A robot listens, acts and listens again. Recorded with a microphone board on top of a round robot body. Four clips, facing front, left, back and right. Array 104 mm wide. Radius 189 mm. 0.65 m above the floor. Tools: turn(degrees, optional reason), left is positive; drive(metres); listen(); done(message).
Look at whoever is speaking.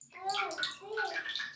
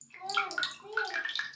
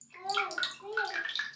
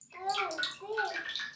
turn(degrees=-65, reason="The child speaking: 65° right.")
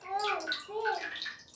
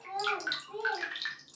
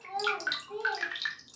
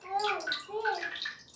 turn(degrees=-20, reason="The child speaking is now 20° right.")
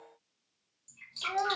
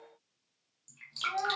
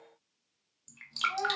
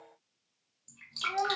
done("Found it: a child speaking, straight ahead, under 1 m away.")